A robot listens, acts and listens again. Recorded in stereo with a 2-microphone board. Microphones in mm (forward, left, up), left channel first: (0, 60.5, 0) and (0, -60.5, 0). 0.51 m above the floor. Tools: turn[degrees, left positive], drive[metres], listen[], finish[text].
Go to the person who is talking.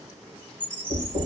Action: listen[]
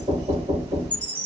Action: listen[]
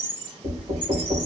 Action: finish[I can't make out anyone speaking to turn to.]